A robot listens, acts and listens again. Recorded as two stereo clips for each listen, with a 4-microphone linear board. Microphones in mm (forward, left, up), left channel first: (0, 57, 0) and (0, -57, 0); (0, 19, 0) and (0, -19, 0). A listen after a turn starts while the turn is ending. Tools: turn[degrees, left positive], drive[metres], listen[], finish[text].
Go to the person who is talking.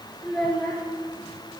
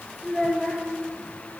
Action: turn[30]
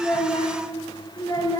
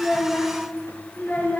Thought: So it is at 145° left.
Action: turn[145]
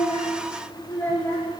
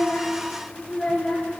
Thought: The child speaking is now 20° left.
Action: turn[20]
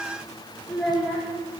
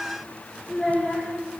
Action: drive[1.0]
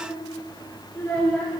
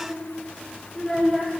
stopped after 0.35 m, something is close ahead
Thought: The child speaking is now 15° left.
Action: turn[15]
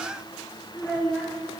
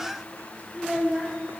Action: finish[Blocked. The child speaking is further on, straight ahead.]